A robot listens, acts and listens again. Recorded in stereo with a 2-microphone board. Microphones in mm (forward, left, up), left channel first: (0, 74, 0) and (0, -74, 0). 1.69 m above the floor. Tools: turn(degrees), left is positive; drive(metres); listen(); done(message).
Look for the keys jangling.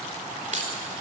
turn(degrees=-55)
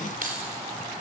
turn(degrees=-70)
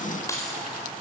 turn(degrees=20)
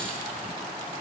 listen()
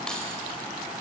listen()
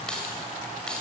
done("Facing the keys jangling.")